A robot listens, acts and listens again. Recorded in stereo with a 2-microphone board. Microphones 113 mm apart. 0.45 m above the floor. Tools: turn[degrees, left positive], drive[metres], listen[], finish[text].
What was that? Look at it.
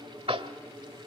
Thought: The tapping: about 55° right or 125° right.
Action: turn[-55]
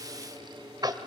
Thought: So it is at 50° right.
Action: turn[-50]
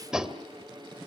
Thought: The tapping is now 10° right.
Action: turn[-10]
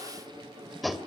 Action: finish[Facing the tapping.]